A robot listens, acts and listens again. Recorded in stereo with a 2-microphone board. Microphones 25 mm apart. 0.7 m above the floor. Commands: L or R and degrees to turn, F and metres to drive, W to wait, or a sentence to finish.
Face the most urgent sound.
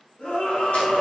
L65
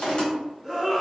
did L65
Found it: a scream, straight ahead, 1 to 2 m away.